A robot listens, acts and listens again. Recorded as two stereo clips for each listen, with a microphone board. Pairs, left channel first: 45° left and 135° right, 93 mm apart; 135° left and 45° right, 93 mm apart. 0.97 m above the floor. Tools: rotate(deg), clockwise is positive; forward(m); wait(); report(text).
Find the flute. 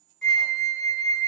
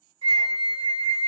rotate(40)
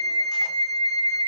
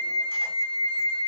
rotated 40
rotate(15)
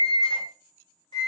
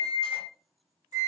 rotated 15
report("Facing the flute.")